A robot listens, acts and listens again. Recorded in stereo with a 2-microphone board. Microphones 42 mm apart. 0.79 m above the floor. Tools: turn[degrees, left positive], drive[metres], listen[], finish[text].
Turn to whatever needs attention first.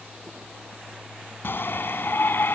Thought: The shout: about 55° left or 125° left.
Action: turn[55]
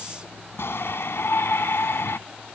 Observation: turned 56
Thought: So it is at 65° left.
Action: turn[65]
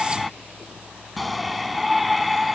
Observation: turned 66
Action: finish[Facing the shout.]